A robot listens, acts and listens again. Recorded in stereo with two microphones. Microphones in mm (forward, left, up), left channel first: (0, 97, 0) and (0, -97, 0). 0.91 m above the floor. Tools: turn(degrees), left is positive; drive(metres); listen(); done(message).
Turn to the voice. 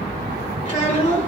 turn(degrees=40)
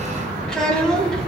done("Facing the child speaking.")